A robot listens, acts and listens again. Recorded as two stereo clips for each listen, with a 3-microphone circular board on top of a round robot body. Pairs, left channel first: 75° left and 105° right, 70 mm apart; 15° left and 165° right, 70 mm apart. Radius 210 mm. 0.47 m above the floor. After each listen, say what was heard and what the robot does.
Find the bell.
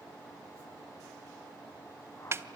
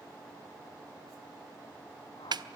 Keep listening.
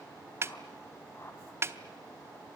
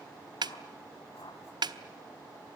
Keep listening.
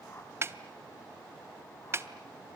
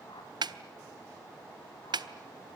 I can't make out a bell to turn to.